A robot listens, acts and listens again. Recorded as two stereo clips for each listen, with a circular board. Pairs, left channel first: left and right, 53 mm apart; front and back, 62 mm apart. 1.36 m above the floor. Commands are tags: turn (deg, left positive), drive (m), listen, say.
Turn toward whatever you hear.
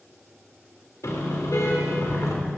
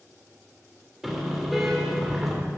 <turn deg="90"/>
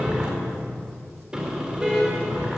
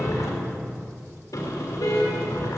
<turn deg="-15"/>
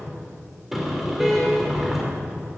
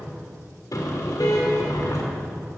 <say>Facing the car horn.</say>